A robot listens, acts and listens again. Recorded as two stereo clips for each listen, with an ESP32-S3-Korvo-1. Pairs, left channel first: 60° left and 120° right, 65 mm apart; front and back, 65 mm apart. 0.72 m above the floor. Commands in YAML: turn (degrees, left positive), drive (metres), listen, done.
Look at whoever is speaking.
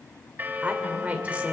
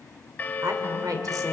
turn: 170
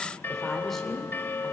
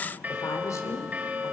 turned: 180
turn: -25
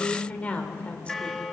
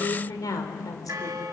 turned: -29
turn: -10
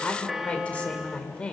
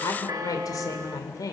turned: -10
turn: -10
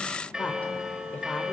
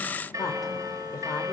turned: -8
done: "Found it: a woman speaking, straight ahead, 2 to 4 m away."